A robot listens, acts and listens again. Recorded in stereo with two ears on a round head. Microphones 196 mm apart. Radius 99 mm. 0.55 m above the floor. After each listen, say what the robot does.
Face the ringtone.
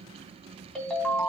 Turn 30° left.
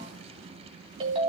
Turn 30° right.
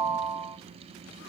Turn 15° right.
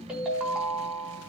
Facing the ringtone.